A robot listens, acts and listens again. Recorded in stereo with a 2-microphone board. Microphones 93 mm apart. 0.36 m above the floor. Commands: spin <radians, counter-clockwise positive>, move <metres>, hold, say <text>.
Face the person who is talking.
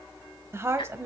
spin -0.52
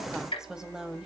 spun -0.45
spin -0.17
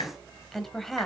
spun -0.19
say Facing the woman speaking.